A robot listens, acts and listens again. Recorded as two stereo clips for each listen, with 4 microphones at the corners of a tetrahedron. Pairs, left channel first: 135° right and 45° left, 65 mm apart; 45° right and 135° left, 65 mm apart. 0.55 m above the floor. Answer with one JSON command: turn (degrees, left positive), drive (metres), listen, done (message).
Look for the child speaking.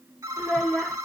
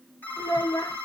{"turn": -50}
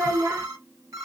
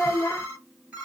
{"done": "Facing the child speaking, 1 to 2 m away."}